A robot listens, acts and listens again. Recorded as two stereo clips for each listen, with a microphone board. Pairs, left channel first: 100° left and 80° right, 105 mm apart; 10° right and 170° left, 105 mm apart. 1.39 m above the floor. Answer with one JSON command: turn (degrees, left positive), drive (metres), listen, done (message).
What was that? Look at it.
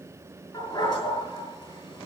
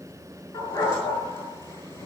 {"turn": 55}
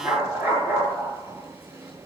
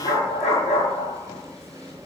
{"done": "Facing the dog barking, over 4 m away."}